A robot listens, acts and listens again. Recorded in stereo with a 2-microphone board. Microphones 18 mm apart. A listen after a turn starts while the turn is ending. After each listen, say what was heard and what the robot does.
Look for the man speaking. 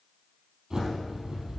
Keep listening.
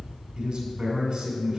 The man speaking: about 55° right or 125° right. Turn 55° right.
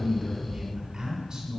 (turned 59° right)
So it is at 55° right. Turn 55° right.
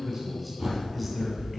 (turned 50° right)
Facing the man speaking.